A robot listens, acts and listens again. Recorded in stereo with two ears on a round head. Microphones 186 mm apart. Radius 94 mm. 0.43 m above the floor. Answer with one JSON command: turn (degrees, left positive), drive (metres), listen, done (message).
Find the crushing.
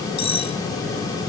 {"listen": true}
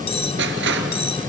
{"turn": -55}
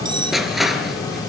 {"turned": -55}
{"done": "Facing the crushing."}